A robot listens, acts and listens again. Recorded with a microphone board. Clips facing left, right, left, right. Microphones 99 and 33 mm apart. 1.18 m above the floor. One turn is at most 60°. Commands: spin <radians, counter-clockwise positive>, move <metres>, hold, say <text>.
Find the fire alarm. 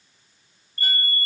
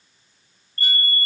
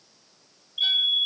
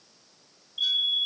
spin 0.26
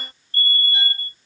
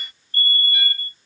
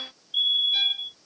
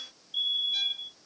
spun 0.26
spin 1.05
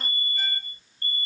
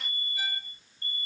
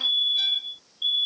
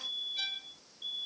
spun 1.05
spin 1.05
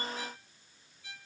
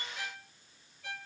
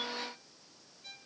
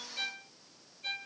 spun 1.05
spin 0.87
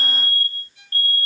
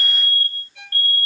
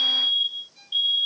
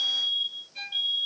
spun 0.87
spin 0.52
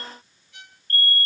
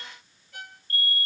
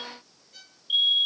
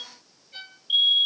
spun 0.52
spin -0.17
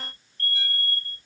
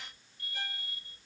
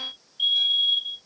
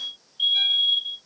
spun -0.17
say Found it: a fire alarm, straight ahead.